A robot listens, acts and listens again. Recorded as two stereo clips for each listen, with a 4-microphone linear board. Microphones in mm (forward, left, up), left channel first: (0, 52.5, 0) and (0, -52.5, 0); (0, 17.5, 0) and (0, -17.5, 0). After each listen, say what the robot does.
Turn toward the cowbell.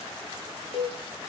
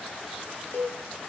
Turn 65° left.
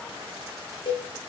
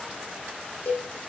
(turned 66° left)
Turn 50° left.
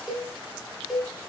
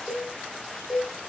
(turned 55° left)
Found it: a cowbell, straight ahead.